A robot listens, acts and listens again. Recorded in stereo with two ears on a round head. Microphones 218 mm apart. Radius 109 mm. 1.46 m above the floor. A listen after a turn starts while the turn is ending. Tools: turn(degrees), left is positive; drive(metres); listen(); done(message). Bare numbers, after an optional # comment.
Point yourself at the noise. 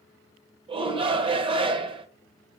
# The shout: about 25° right or 155° right.
turn(-25)
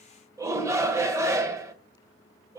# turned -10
turn(-30)
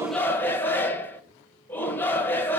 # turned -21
# So it is at 10° left.
turn(10)
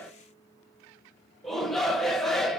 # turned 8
done("Facing the shout, 1 to 2 m away.")